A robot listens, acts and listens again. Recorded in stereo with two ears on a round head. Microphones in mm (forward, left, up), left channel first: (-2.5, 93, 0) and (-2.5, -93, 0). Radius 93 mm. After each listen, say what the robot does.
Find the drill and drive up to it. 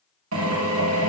Turn 70° right.
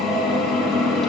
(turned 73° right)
Drive 1.0 m forward.
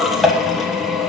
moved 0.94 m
Drive 1.0 m forward.
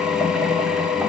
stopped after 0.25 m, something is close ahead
Arrived at the drill, straight ahead.